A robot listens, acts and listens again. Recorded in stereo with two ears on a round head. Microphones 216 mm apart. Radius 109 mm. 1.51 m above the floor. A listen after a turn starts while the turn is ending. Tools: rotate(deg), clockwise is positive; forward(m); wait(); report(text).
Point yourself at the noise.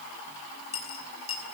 rotate(-25)
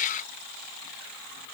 wait()
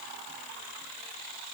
report("I heard a dropped coin, but can't make it out now. It was about straight ahead or 130° left.")